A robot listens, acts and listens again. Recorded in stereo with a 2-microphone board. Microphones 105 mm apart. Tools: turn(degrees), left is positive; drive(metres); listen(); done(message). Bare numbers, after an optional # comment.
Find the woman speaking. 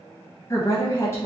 # The woman speaking: about 25° left or 155° left.
turn(25)
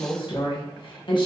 # So it is at 130° left.
turn(130)
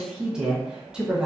done("Facing the woman speaking.")